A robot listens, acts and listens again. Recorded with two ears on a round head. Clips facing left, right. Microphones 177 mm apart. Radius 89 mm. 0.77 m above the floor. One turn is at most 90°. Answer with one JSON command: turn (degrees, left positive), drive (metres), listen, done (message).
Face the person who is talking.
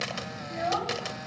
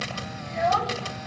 {"turn": -60}
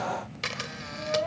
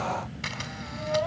{"listen": true}
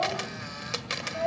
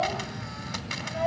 {"listen": true}
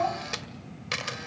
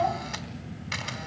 {"done": "I heard a child speaking, but can't make it out now. It was about straight ahead or 60° right."}